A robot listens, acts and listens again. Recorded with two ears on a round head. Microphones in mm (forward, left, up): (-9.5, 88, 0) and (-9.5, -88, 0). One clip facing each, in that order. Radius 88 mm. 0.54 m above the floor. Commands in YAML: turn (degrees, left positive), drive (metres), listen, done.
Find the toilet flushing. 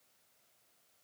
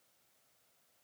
listen: true
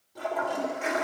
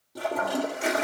turn: -45
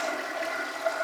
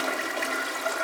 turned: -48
turn: -80
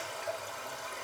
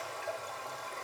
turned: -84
done: "Facing the toilet flushing."